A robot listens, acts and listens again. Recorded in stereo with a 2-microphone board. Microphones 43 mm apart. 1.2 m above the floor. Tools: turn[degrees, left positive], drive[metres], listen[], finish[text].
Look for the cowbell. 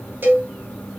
Thought: The cowbell: about 50° right or 130° right.
Action: turn[-50]
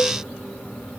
Action: listen[]
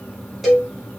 Action: finish[Found it: a cowbell, straight ahead.]